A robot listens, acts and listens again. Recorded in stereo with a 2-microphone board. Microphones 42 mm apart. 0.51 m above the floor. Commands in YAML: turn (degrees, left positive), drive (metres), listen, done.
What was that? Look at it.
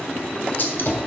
turn: 50
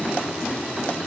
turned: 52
listen: true
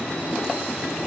done: "I heard a gunshot, but can't make it out now. It was about straight ahead or 75° left."